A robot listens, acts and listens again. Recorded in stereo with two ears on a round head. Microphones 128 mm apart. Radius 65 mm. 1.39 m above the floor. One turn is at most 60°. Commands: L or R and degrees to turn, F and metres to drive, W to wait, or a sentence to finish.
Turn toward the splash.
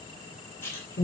L15
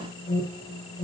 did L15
W
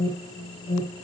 I heard a splash, but can't make it out now. It was about straight ahead or 150° left.